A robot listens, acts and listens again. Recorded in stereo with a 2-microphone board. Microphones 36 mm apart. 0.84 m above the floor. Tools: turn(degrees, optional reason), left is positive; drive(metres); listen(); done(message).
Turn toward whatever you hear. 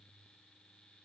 listen()
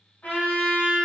turn(degrees=60, reason="The trumpet: about 60° left or 120° left.")
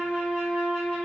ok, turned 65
turn(degrees=20, reason="So it is at 20° left.")
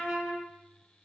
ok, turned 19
done("Found it: a trumpet, straight ahead, 1 to 2 m away.")